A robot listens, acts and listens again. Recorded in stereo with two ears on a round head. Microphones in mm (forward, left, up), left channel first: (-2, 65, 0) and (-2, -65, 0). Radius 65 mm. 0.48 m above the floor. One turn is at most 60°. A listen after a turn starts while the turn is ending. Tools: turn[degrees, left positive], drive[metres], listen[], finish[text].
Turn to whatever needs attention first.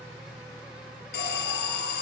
Action: turn[60]
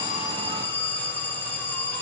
Thought: So it is at 15° left.
Action: turn[15]
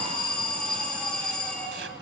Action: finish[Facing the alarm.]